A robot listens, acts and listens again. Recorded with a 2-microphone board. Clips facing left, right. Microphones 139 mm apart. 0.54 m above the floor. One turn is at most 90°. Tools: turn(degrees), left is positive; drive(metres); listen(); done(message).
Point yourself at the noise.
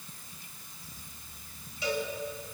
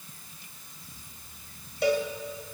turn(degrees=-65)
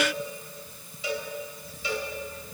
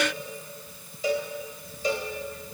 turn(degrees=-45)
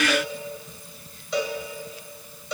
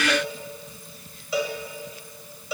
done("Found it: a cowbell, straight ahead, 1 to 2 m away.")